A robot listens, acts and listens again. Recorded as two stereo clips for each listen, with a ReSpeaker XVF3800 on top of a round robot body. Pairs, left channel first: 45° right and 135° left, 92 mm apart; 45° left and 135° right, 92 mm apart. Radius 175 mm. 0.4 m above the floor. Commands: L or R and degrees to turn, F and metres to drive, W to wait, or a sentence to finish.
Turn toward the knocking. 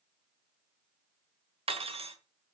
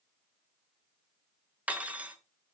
W
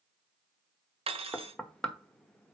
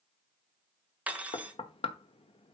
L40
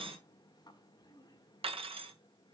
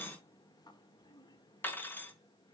W
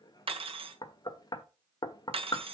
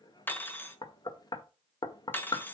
Found it: knocking, straight ahead, 1 to 2 m away.